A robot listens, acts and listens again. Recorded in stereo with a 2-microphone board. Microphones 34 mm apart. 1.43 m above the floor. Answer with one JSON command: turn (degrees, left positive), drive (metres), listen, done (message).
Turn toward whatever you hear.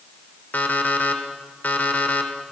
{"turn": 60}
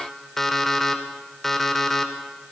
{"done": "Found it: an alarm clock, straight ahead."}